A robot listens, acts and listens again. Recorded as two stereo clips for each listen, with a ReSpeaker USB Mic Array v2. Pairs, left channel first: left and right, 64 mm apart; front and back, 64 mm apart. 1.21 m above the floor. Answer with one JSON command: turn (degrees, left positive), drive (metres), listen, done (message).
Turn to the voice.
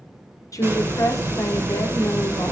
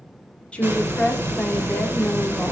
{"turn": 70}
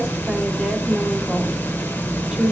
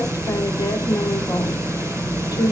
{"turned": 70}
{"turn": -10}
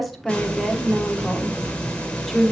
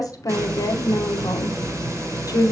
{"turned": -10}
{"done": "Facing the woman speaking."}